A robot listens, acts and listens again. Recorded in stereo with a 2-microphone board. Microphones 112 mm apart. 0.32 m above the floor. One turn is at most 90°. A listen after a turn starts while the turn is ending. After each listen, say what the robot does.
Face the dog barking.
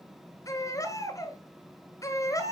Keep listening.
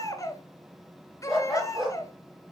Turn 30° right.
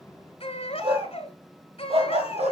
Turn 90° right.
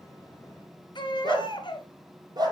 Turn 40° right.
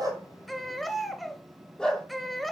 Facing the dog barking.